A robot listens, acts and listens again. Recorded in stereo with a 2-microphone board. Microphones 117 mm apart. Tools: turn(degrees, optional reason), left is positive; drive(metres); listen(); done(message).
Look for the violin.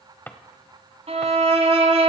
turn(degrees=-60, reason="The violin: about 60° right or 120° right.")
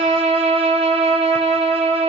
turn(degrees=-60, reason="So it is at 60° right.")
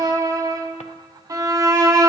turn(degrees=-30, reason="The violin is now 30° right.")
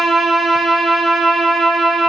done("Found it: a violin, straight ahead.")